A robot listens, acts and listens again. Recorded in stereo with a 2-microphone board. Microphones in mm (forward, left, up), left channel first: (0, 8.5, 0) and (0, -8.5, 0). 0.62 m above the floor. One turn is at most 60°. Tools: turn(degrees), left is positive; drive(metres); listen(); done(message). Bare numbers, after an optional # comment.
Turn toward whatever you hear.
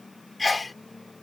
turn(30)
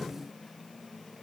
listen()
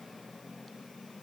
done("I heard a sneeze, but can't make it out now. It was about 25° right or 145° left.")